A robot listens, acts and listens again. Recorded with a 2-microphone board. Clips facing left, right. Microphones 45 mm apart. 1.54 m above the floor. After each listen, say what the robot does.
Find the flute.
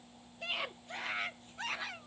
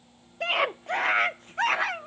Keep listening.
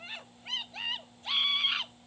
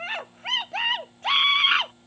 Keep listening.
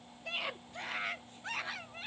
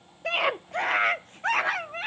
I can't make out a flute to turn to.